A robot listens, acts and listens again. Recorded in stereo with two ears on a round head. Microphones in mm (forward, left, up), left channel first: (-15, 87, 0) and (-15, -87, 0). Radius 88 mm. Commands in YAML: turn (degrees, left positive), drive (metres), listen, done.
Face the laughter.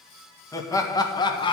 turn: 25
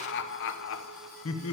turn: 100
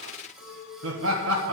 turn: -70
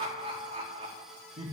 turn: -25
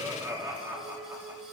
turn: -10
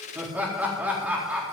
done: "Found it: laughter, straight ahead, 2 to 4 m away."